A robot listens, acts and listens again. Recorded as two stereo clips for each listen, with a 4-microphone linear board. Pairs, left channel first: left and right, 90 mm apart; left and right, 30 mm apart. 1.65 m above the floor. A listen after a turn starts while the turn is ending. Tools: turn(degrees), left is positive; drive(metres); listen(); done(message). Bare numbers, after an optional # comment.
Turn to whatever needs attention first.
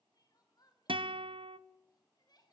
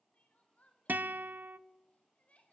# The crying: about 50° left or 130° left.
turn(50)
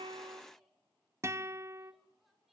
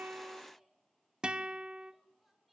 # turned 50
done("Found it: crying, straight ahead.")